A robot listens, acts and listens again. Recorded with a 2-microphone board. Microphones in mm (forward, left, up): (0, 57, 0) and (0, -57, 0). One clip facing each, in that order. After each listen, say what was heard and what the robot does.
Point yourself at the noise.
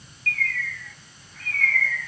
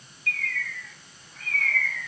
The bird: about 15° right or 165° right. Turn 15° right.
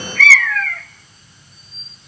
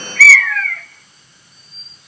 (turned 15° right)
Facing the bird, 1 to 2 m away.